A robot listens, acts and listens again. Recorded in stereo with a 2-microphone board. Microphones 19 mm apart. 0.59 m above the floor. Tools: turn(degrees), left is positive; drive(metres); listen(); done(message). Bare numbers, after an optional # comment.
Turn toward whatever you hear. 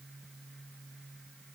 listen()
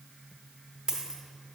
# The dropped coin: about 35° right or 145° right.
turn(-35)
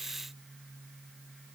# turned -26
listen()
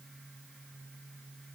done("I heard a dropped coin, but can't make it out now. It was about 10° right or 120° right.")